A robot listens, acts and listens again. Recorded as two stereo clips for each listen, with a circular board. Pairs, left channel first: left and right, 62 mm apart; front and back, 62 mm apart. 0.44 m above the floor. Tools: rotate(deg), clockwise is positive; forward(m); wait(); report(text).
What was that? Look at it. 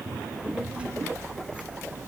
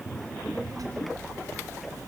rotate(160)
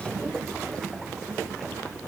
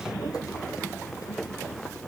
wait()
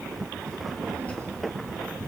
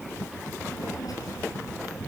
rotate(-20)
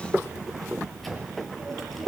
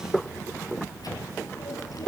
report("Found it: a child speaking, straight ahead.")